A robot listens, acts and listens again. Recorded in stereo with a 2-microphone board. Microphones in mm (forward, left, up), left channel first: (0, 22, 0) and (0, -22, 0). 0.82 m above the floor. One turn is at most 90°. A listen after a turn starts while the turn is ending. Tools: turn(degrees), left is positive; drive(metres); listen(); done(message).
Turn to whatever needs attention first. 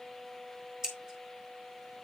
listen()
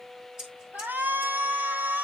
turn(degrees=-55)
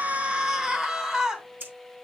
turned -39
turn(degrees=-20)
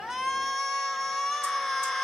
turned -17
done("Facing the shout, 2 to 4 m away.")